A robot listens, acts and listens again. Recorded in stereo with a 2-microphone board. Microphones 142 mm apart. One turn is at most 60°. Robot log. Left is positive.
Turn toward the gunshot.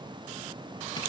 cmd idle
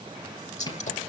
note: The gunshot: about 60° left or 120° left.
cmd yaw +60
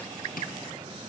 cmd idle
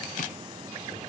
end: I heard a gunshot, but can't make it out now. It was about straight ahead or 60° left.